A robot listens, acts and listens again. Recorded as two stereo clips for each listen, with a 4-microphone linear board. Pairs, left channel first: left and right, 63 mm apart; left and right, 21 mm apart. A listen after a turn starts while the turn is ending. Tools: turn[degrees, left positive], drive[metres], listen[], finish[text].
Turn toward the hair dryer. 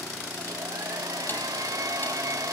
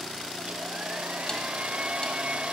Action: turn[-90]
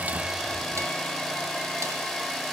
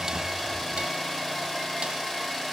Action: finish[Found it: a hair dryer, straight ahead.]